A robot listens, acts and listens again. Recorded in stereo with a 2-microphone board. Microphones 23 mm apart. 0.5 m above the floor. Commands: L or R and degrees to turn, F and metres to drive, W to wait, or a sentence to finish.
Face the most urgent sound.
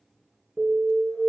R45
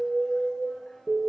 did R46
R90
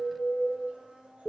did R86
Found it: an alarm, straight ahead.